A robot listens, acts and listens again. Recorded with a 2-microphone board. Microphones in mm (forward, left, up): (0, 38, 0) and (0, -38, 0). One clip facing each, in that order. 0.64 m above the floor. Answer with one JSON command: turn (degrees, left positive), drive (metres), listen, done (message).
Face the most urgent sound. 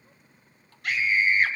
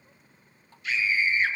{"turn": 75}
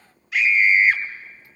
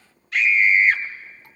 {"turn": 10}
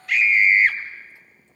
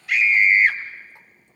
{"done": "Facing the scream."}